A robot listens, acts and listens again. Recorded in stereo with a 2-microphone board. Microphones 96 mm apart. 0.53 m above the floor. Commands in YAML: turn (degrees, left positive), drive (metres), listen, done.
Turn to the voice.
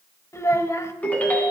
turn: 30
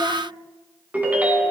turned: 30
listen: true
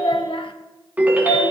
turn: 115
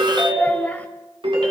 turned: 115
listen: true
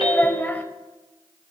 turn: 15
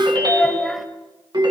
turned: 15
listen: true
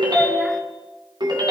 listen: true
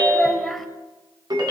done: "Facing the child speaking."